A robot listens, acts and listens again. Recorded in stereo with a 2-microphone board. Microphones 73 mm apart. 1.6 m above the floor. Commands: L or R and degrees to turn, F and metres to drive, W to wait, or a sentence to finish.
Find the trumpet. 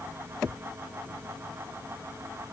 W
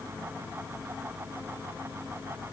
W
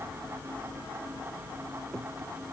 I can't make out a trumpet to turn to.